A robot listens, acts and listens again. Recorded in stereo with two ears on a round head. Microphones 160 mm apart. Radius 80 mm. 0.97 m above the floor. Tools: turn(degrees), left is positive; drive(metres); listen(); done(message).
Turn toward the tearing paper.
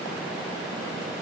listen()
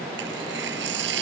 turn(degrees=-75)
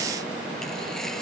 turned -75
listen()
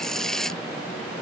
done("Facing the tearing paper.")